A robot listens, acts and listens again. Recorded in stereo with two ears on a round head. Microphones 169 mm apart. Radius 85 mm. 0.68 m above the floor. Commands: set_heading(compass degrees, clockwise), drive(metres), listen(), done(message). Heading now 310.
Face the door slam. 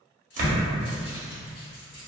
set_heading(350)
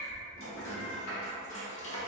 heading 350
listen()
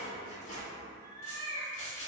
done("I heard a door slam, but can't make it out now. It was about straight ahead or 100° right.")